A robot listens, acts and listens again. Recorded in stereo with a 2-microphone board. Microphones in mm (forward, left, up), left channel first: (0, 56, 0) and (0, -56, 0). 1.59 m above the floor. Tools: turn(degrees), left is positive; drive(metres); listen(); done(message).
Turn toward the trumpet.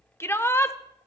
listen()
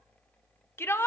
listen()
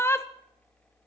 done("I can't make out a trumpet, only a shout.")